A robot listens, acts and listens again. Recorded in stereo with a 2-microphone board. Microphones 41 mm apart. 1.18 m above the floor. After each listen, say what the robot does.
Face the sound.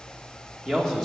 Turn 30° left.
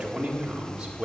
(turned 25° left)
Turn 20° right.
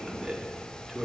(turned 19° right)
Facing the man speaking, 1 to 2 m away.